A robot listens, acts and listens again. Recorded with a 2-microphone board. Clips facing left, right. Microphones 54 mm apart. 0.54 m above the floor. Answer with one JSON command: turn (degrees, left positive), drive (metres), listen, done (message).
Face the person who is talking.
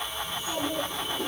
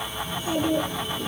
{"turn": -65}
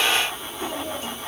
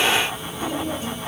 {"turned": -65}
{"done": "Facing the child speaking, over 4 m away."}